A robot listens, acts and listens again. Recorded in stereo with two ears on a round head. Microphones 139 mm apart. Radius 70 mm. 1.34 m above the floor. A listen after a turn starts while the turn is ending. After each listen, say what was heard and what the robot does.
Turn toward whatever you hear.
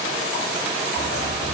Turn 90° left.
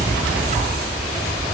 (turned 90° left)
So it is at 10° right. Turn 10° right.
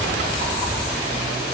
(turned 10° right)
Facing the dog barking, over 4 m away.